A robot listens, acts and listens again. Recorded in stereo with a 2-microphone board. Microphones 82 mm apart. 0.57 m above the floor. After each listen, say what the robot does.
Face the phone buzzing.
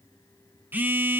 Turn 20° right.
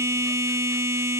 Turn 140° right.
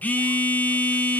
Turn 25° left.
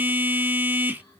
Turn 25° right.
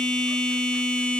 Turn 15° left.
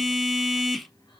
Found it: a phone buzzing, straight ahead, under 1 m away.